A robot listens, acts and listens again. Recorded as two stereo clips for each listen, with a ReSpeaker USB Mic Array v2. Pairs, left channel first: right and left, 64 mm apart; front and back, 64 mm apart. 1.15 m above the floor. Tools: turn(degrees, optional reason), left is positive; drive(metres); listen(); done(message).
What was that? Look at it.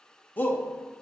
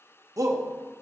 turn(degrees=-155, reason="The shout: 155° right.")
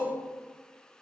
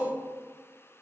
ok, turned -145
turn(degrees=-10, reason="The shout is now 10° right.")
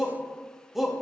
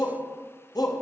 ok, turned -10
done("Facing the shout, under 1 m away.")